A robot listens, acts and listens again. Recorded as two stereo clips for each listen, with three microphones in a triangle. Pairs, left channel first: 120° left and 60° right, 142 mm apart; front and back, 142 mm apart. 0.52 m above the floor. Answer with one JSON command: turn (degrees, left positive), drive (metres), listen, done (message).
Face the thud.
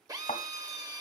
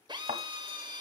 {"turn": 155}
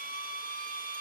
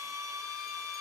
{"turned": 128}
{"turn": 25}
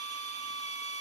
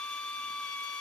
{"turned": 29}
{"done": "I heard a thud from this way, but can't make it out now."}